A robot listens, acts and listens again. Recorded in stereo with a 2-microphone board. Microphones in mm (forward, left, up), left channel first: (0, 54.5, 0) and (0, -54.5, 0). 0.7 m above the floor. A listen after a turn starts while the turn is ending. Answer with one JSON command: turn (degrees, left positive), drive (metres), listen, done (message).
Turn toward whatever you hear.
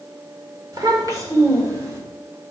{"turn": -30}
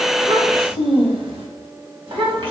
{"turn": -120}
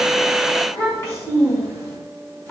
{"turn": 25}
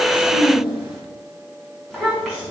{"done": "Found it: a child speaking, straight ahead, over 4 m away."}